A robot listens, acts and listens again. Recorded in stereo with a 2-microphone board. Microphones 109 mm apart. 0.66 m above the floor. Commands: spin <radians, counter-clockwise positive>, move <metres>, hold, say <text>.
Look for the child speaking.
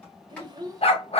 spin -0.61
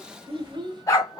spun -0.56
spin -0.79
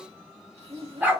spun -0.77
spin -2.18
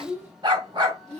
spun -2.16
spin -0.44
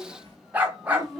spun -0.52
say Found it: a child speaking, straight ahead, 2 to 4 m away.